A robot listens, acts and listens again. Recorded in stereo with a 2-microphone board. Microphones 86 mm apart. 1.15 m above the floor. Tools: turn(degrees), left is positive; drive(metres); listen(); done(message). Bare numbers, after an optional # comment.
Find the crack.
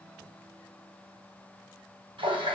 listen()
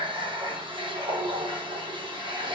listen()
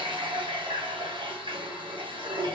done("I can't make out a crack to turn to.")